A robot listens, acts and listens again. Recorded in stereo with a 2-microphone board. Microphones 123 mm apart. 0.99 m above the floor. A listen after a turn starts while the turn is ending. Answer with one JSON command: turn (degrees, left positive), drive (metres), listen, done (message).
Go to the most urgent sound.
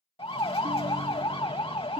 {"turn": 50}
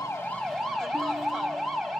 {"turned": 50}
{"drive": 1.0}
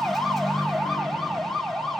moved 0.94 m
{"drive": 1.0}
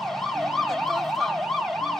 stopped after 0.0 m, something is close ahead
{"done": "I am next to the siren."}